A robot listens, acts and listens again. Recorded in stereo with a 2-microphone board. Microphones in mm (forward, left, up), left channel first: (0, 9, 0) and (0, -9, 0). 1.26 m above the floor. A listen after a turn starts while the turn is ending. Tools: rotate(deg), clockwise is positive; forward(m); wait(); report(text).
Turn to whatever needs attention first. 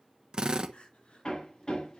rotate(-90)
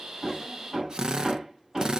wait()
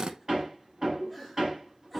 wait()
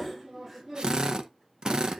report("Facing where the crying came from. I can't hear it now.")